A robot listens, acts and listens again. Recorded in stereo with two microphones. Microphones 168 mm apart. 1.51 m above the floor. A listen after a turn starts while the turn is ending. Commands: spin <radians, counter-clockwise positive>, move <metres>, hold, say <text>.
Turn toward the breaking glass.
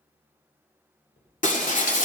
spin 0.87
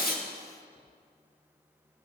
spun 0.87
hold
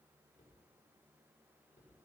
say I heard breaking glass, but can't make it out now. It was about straight ahead or 80° left.